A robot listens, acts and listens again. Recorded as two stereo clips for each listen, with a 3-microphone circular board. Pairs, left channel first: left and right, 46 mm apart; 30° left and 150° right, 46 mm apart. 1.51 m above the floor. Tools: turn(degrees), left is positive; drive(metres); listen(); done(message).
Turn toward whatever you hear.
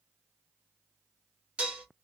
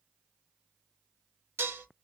turn(degrees=-150)
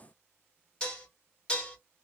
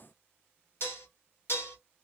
turn(degrees=25)
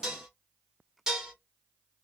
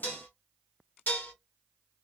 turn(degrees=-10)
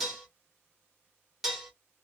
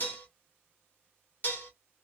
done("Found it: dishes clattering, straight ahead.")